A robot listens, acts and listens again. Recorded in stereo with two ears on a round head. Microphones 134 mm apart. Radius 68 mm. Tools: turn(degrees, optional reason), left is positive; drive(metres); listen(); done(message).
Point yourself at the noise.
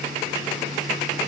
listen()
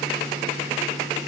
listen()
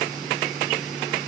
done("I can't make out anything to turn to.")